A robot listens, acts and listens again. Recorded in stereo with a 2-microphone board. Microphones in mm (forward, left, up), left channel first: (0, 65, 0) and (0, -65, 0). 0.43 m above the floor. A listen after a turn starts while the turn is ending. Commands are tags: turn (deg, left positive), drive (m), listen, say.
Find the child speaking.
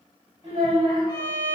<turn deg="-40"/>
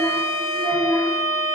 <turn deg="20"/>
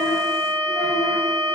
<listen/>
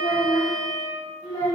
<turn deg="45"/>
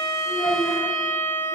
<say>Found it: a child speaking, straight ahead.</say>